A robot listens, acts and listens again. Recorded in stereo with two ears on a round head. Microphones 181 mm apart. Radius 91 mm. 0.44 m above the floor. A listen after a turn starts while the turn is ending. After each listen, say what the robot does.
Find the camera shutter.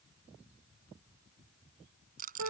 Keep listening.
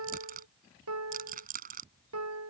Keep listening.
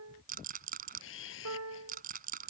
Turn 70° left.
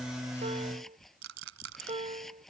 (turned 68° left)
Facing the camera shutter.